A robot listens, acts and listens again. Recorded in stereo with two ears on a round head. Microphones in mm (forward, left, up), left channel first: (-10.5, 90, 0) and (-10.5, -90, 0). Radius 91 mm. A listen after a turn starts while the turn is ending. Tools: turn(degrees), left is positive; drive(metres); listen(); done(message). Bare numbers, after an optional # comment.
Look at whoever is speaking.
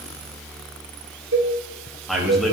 turn(30)
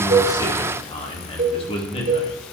# So it is at 150° left.
turn(150)
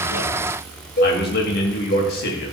# The man speaking is now 50° left.
turn(50)
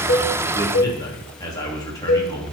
# The man speaking is now 20° left.
turn(20)
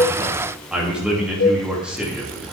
done("Facing the man speaking.")